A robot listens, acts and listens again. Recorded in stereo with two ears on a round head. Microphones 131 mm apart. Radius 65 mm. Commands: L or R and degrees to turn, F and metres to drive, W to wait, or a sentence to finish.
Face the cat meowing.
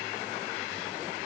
W
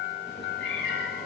L75
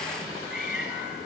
Found it: a cat meowing, straight ahead, over 4 m away.